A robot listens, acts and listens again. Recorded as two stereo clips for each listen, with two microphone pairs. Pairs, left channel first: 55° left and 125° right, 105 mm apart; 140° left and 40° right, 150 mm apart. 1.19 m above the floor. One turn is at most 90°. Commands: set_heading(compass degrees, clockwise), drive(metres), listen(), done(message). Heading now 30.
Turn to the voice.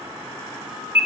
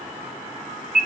listen()
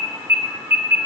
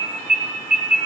listen()
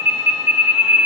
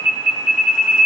done("I can't make out anyone speaking to turn to.")